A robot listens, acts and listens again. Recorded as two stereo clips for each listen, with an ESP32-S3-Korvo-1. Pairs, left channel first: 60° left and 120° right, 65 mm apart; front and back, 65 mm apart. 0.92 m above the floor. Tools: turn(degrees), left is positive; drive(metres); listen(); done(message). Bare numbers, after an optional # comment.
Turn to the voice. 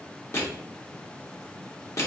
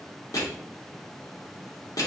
listen()
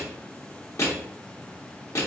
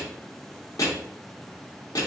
listen()
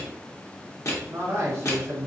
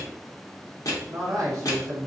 # The man speaking: 165° right.
turn(-165)
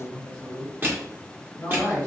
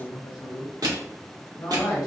done("Facing the man speaking, 1 to 2 m away.")